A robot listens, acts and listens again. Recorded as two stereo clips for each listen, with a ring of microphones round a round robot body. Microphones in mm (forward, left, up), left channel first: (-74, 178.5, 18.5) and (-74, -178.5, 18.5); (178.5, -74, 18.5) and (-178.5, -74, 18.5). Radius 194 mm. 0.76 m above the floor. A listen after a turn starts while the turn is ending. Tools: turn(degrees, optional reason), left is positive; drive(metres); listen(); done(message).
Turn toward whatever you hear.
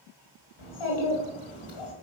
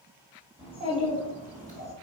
turn(degrees=110, reason="The child speaking: 110° left.")
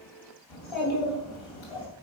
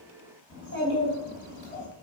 turn(degrees=70, reason="The child speaking is now 70° left.")
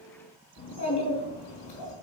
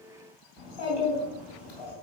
turn(degrees=40, reason="The child speaking is now 40° left.")
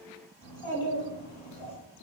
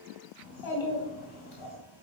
turn(degrees=15, reason="The child speaking is now 15° left.")
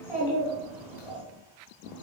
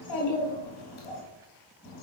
done("Found it: a child speaking, straight ahead, 2 to 4 m away.")